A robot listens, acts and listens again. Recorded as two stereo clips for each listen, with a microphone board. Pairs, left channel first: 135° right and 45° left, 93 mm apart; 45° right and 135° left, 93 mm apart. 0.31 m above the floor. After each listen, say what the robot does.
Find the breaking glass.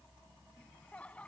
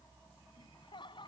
Keep listening.
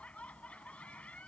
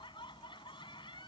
Keep listening.
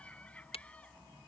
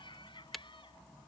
Turn 135° right.
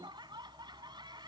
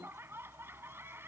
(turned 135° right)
Facing where the breaking glass came from. I can't hear it now.